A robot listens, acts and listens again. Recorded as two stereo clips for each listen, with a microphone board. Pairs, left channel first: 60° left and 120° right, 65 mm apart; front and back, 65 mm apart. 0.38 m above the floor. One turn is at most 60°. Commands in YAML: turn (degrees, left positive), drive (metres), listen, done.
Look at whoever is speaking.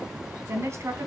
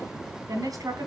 turn: -60
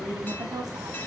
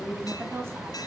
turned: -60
turn: -60
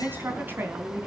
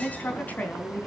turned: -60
turn: -60
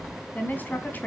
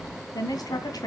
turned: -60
done: "Facing the woman speaking, 2 to 4 m away."